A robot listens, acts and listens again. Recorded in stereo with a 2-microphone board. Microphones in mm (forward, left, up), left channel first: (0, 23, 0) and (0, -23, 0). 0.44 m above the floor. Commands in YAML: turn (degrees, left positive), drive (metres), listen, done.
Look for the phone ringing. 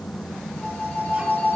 turn: 50
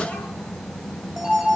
done: "Facing the phone ringing."